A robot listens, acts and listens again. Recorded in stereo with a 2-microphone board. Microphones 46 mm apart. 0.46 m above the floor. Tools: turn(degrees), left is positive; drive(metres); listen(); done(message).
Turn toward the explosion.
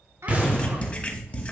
turn(degrees=-30)
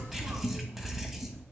listen()
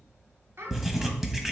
done("I heard an explosion, but can't make it out now. It was about straight ahead or 120° right.")